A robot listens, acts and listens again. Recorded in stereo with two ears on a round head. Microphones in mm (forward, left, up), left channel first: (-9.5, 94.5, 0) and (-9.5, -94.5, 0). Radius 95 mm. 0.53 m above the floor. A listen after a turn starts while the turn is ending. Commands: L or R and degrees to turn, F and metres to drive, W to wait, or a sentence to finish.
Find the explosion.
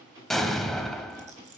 L30
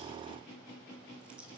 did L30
W
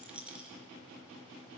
I heard an explosion, but can't make it out now. It was about 30° right or 150° left.